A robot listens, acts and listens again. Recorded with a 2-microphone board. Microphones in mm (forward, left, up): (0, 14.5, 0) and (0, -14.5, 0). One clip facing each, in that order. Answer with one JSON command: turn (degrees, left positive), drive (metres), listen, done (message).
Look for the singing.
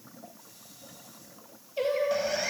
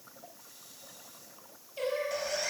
{"turn": 20}
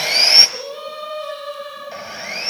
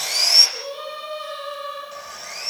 {"turn": 30}
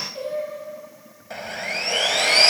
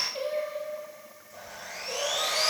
{"turn": -25}
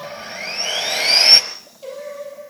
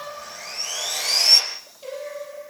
{"done": "Found it: singing, straight ahead, over 4 m away."}